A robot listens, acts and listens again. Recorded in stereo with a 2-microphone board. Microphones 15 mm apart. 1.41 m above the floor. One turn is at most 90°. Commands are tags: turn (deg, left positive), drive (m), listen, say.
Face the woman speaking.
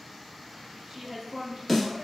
<turn deg="-25"/>
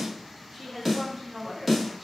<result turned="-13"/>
<turn deg="-30"/>
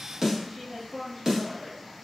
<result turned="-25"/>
<turn deg="-30"/>
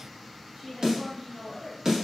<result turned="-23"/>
<turn deg="-20"/>
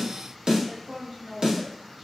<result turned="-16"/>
<turn deg="-35"/>
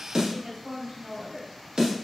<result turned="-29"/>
<turn deg="-90"/>
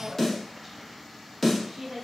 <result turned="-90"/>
<turn deg="-25"/>
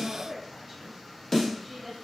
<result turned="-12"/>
<turn deg="-15"/>
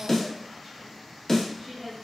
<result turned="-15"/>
<say>Found it: a woman speaking, straight ahead.</say>